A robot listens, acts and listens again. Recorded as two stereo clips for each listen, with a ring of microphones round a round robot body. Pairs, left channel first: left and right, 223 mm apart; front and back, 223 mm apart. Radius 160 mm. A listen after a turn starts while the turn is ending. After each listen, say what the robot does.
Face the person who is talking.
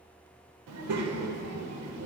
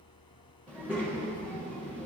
Turn 95° right.
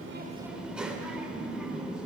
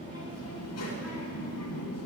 Found it: a child speaking, straight ahead, 1 to 2 m away.